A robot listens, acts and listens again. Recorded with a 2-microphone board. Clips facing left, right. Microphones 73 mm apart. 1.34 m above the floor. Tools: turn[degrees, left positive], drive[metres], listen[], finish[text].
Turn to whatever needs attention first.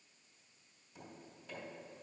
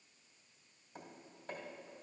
Action: listen[]
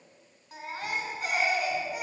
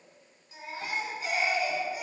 Thought: The baby crying: about 65° left or 115° left.
Action: turn[65]
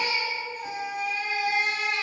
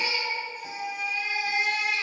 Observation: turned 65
Thought: So it is at 50° left.
Action: turn[50]
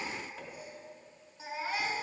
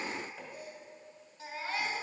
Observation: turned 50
Thought: The baby crying is now 10° left.
Action: turn[10]
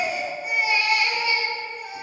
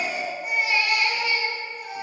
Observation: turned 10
Action: finish[Facing the baby crying.]